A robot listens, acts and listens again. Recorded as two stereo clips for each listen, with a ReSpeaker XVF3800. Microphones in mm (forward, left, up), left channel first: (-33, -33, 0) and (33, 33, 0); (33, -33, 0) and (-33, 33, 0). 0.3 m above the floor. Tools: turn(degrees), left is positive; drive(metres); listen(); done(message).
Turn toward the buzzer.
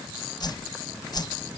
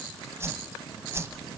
listen()
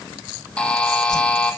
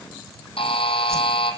turn(degrees=-55)
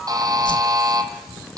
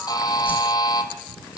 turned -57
done("Found it: a buzzer, straight ahead, 1 to 2 m away.")